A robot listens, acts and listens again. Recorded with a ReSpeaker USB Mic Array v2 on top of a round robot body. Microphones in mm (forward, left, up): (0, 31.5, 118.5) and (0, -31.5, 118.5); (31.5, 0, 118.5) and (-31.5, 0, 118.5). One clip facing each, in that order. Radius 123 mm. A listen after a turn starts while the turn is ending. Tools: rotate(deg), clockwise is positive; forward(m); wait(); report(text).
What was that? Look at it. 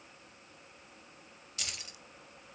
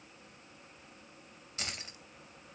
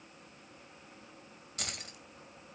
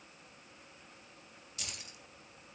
rotate(35)
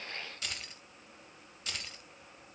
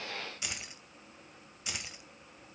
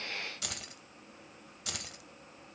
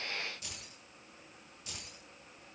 rotate(15)
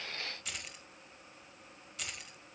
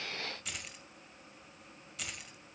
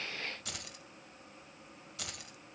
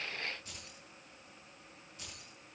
report("Facing the keys jangling, 2 to 4 m away.")